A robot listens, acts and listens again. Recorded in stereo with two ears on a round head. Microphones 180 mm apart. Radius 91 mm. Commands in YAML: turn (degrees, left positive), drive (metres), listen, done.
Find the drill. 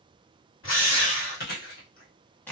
turn: 70
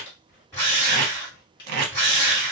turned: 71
turn: 15
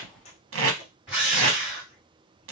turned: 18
done: "Facing the drill, 1 to 2 m away."